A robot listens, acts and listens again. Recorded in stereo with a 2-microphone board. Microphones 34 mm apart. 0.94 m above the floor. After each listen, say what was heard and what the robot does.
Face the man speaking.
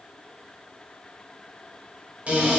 Keep listening.
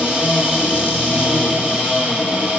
Keep listening.
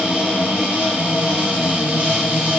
I can't make out a man speaking, only a cupboard door.